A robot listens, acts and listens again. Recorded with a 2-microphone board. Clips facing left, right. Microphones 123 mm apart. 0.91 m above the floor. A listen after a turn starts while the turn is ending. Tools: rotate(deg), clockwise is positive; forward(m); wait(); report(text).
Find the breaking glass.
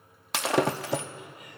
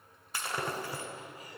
rotate(-90)
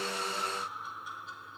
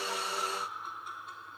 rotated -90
report("Facing where the breaking glass came from. I can't hear it now.")